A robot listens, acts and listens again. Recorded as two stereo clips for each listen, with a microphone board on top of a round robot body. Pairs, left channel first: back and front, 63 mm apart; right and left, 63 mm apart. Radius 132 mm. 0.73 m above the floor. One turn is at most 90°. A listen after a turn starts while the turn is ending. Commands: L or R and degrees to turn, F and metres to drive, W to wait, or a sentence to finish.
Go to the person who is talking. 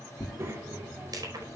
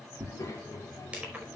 R50
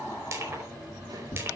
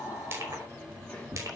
R20
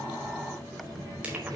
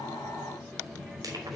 F1.0
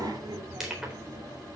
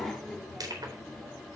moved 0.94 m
F1.0
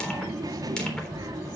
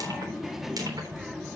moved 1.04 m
F1.0
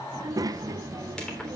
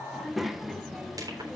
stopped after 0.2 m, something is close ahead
I am next to the child speaking.